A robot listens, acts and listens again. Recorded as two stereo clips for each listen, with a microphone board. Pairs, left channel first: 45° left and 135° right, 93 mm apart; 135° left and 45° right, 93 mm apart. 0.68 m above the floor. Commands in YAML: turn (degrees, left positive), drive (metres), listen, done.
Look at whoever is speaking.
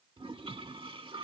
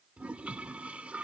listen: true
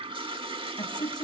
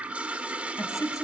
turn: 80
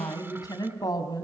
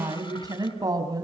done: "Facing the woman speaking, over 4 m away."